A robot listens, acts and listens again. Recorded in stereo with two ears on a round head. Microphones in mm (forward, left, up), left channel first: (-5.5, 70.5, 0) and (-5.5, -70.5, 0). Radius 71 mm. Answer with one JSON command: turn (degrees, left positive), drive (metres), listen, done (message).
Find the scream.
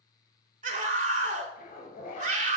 {"turn": -50}
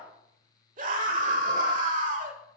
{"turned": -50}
{"turn": -65}
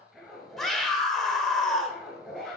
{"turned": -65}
{"done": "Facing the scream, 1 to 2 m away."}